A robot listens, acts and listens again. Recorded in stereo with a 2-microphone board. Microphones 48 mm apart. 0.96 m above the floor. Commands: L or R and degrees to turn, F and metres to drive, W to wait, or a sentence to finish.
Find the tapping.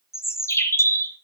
W
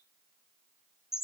W
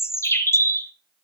I can't make out tapping to turn to.